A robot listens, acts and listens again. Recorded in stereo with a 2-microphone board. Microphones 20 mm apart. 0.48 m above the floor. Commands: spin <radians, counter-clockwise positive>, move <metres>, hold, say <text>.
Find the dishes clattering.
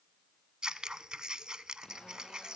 hold
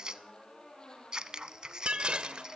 spin -0.96
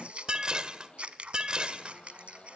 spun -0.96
spin -0.96
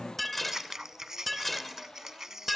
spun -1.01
say Found it: dishes clattering, straight ahead.